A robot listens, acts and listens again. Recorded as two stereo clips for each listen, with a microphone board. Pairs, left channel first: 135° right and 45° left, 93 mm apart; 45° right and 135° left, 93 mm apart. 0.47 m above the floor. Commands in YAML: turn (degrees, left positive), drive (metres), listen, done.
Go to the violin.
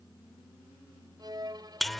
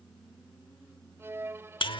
turn: 75
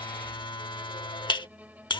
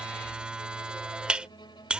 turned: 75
listen: true
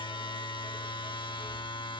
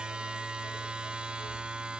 listen: true
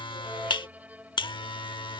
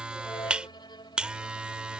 turn: -25
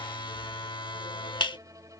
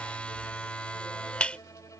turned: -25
listen: true
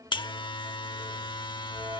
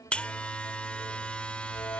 listen: true
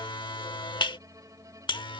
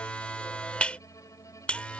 done: "Facing where the violin came from. I can't hear it now. I did not reach it."